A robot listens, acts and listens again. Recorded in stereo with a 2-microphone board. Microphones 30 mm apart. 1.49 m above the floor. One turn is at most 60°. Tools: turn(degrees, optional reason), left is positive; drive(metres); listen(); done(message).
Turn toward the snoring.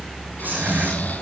turn(degrees=60, reason="The snoring: about 70° left or 110° left.")
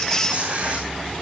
listen()
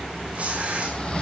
turn(degrees=40, reason="So it is at 40° left.")
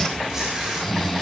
turn(degrees=10, reason="The snoring is now 10° left.")
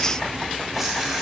listen()
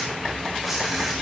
listen()
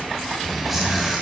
done("Found it: snoring, straight ahead.")